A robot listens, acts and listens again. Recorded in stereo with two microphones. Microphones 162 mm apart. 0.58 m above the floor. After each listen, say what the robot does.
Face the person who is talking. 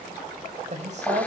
Turn 45° right.
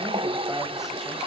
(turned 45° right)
Keep listening.
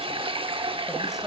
Facing the woman speaking, 2 to 4 m away.